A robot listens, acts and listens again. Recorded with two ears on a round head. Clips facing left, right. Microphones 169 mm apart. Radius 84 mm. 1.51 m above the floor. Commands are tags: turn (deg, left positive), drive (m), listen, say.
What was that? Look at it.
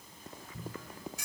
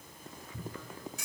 <turn deg="-90"/>
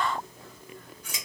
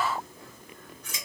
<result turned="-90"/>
<turn deg="10"/>
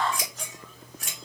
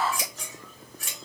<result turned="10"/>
<say>Found it: scissors, straight ahead, 1 to 2 m away.</say>